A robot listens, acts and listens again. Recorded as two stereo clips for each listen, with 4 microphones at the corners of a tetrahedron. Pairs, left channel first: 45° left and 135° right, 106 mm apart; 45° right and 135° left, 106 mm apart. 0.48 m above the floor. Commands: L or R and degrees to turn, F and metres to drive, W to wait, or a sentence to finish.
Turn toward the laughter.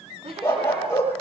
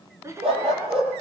R165
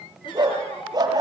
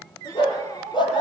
L10
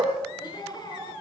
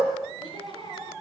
Facing the laughter, over 4 m away.